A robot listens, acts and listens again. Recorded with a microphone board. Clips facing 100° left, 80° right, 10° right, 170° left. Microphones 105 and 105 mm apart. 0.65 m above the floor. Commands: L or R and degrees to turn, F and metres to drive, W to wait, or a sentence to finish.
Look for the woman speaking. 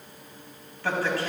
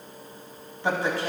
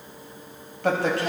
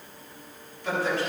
R10
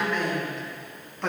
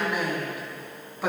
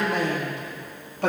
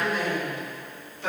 Facing the woman speaking.